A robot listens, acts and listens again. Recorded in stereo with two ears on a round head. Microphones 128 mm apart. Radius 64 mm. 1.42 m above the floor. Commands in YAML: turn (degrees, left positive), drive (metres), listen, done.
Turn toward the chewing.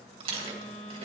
turn: -40
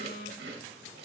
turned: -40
turn: -100
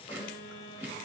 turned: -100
turn: -20
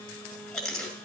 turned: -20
done: "Found it: chewing, straight ahead."